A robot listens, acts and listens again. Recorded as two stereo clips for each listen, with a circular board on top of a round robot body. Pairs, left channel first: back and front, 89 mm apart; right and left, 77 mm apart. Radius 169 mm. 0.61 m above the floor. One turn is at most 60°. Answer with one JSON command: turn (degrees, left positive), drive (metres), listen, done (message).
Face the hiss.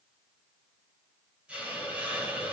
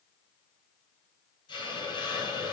{"turn": -60}
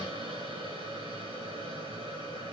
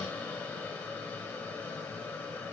{"turn": -20}
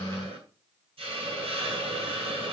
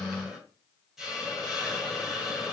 {"done": "Found it: a hiss, straight ahead."}